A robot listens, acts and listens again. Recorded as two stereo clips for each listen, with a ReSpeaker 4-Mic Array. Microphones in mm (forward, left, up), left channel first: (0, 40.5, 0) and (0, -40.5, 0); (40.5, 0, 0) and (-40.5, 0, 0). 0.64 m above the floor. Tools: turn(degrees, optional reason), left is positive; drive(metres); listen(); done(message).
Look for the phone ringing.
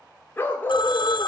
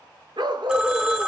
turn(degrees=105, reason="The phone ringing: 105° left.")
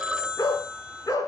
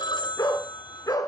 done("Found it: a phone ringing, straight ahead.")